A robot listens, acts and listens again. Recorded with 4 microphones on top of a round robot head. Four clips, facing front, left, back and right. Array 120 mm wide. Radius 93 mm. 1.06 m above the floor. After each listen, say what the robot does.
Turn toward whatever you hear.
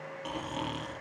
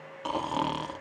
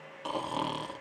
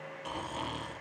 Turn 105° left.
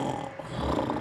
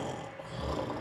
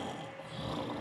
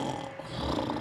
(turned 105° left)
Turn 20° right.
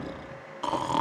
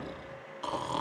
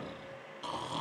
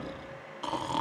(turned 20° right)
Facing the snoring, 1 to 2 m away.